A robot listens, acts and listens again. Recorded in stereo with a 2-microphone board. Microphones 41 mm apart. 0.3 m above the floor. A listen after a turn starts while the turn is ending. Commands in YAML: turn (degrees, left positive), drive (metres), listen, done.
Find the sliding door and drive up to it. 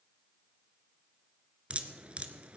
listen: true
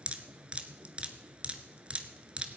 listen: true
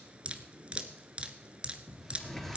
turn: 30
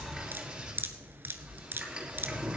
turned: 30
turn: -20
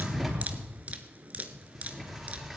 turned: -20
drive: 1.0
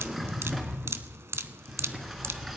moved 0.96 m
drive: 1.0
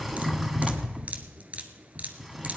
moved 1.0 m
drive: 1.0
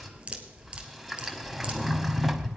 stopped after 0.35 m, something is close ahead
done: "Arrived at the sliding door, straight ahead."